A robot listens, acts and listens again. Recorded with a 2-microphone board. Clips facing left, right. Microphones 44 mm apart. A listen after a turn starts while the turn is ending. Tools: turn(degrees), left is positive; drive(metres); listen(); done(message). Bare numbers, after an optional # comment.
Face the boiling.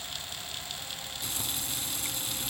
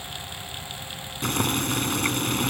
# The boiling: about 60° right or 120° right.
turn(-60)
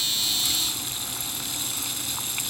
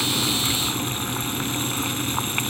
# So it is at 45° right.
turn(-45)
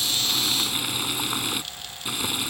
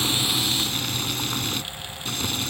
# The boiling is now 15° left.
turn(15)
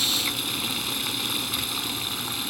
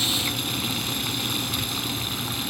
done("Found it: boiling, straight ahead.")